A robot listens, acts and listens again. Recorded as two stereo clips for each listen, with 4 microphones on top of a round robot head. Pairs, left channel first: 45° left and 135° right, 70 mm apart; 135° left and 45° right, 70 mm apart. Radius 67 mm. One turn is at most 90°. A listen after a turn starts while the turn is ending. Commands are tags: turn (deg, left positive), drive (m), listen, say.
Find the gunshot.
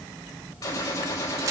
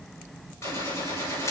<turn deg="80"/>
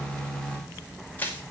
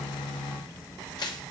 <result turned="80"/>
<say>I heard a gunshot from this way, but can't make it out now.</say>